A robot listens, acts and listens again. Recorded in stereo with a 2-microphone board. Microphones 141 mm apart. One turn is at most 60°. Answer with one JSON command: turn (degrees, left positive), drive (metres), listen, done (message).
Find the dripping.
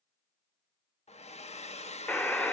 {"listen": true}
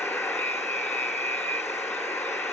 {"listen": true}
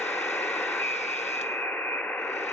{"done": "I can't make out dripping, only a hair dryer and a buzzer."}